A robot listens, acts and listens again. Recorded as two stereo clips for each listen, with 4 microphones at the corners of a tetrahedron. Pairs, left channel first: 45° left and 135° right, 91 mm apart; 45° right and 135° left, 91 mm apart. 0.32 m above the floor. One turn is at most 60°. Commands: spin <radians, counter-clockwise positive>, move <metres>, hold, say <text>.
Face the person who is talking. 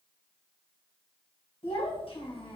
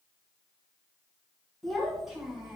spin 0.96
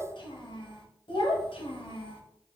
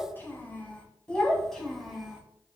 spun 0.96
spin 0.87
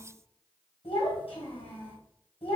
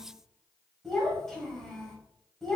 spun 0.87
spin 0.70
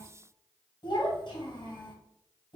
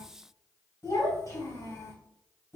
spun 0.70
spin 0.17
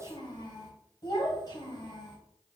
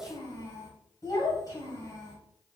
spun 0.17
say Facing the child speaking.